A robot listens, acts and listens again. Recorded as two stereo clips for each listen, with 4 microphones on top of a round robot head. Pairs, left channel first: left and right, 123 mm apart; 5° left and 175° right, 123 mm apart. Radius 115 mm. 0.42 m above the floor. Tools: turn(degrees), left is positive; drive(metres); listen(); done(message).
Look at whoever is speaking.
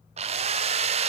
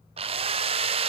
listen()
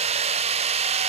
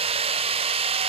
listen()
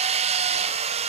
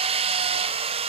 done("I can't make out anyone speaking, only a drill.")